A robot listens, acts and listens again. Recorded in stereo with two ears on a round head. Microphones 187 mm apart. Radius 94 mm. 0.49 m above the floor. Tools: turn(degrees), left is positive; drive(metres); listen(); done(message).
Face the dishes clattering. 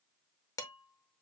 turn(degrees=15)
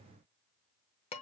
turn(degrees=150)
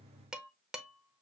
done("Found it: dishes clattering, straight ahead.")